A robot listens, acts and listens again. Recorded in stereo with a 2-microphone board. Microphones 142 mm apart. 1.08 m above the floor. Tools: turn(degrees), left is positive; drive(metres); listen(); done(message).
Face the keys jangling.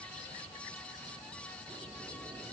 listen()
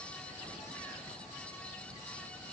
listen()
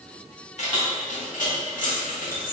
turn(degrees=90)
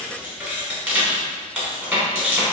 turn(degrees=-10)
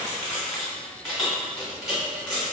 done("Found it: keys jangling, straight ahead, 1 to 2 m away.")